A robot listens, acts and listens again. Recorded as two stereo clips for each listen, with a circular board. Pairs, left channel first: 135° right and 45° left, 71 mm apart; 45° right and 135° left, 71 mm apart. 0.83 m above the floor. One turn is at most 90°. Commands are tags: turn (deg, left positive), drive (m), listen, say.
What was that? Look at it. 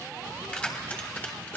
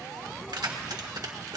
<turn deg="90"/>
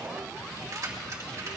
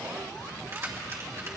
<turn deg="85"/>
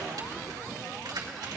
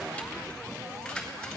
<turn deg="35"/>
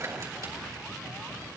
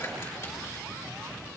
<listen/>
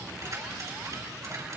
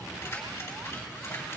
<turn deg="10"/>
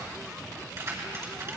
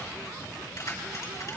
<say>Facing the keys jangling, over 4 m away.</say>